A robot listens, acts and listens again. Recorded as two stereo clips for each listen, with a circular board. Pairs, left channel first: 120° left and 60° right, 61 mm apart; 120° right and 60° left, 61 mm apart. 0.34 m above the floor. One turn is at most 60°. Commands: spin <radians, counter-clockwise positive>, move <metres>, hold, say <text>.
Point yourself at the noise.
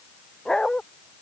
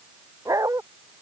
spin 0.70
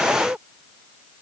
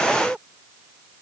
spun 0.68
say Found it: a dog barking, straight ahead.